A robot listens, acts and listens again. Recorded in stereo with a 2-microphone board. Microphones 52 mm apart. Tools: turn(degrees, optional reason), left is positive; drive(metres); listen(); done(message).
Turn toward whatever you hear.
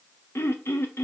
turn(degrees=60, reason="The throat clearing: about 60° left or 120° left.")
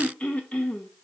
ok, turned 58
turn(degrees=30, reason="So it is at 30° left.")
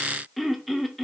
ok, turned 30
done("Facing the throat clearing.")